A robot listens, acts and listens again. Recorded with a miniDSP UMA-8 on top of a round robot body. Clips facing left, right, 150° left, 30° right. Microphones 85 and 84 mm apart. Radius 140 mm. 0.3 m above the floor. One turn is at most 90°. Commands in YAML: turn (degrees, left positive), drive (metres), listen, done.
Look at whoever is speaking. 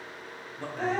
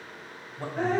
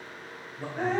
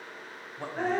turn: -45
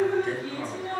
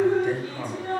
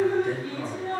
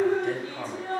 turn: -15
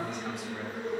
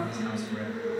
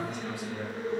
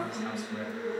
listen: true
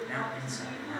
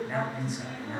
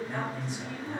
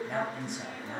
done: "Found it: a man speaking, straight ahead."